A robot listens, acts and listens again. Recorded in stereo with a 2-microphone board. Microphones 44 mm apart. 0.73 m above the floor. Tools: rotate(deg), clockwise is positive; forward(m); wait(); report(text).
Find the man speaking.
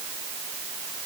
wait()
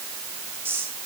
rotate(60)
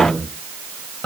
rotate(-15)
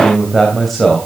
rotate(-10)
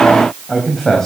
rotate(-10)
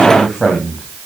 report("Facing the man speaking.")